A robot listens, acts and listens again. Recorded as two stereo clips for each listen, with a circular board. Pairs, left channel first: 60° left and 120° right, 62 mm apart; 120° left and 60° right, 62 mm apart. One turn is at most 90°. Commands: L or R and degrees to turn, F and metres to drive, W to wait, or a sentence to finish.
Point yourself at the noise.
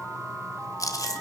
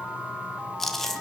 L35
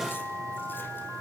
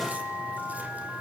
W
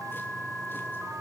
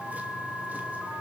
W
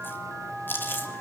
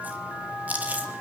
Facing the chewing.